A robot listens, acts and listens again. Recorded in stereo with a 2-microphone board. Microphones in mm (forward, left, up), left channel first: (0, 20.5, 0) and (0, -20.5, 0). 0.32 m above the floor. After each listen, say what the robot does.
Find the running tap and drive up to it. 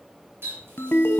Turn 60° right.
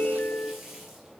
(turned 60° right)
Drive 1.0 m forward.
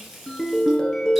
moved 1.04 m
Drive 1.0 m forward.
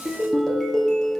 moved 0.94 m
Keep listening.
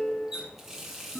Turn 10° right.
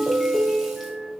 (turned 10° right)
Keep listening.
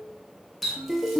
Drive 1.0 m forward.
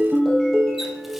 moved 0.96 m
Keep listening.
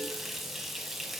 Drive 1.0 m forward.
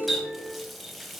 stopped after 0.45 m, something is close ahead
I am next to the running tap.